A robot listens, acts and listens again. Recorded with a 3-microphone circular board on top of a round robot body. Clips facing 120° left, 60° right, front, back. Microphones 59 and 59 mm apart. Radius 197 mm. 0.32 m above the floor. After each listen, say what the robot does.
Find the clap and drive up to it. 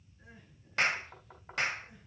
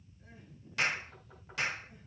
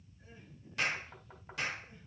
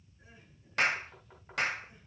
Turn 160° left.
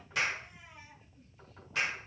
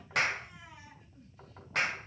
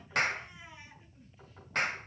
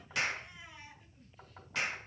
Turn 35° right.
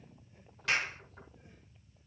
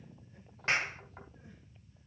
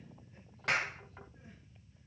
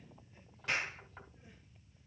Drive 1.0 m forward.
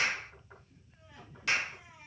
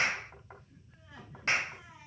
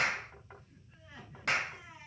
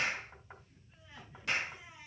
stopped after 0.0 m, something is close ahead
Turn 10° right.
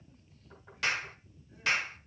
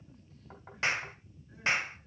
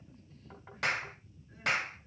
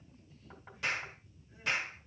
Something is in my way. I am facing the clap but have not reached it.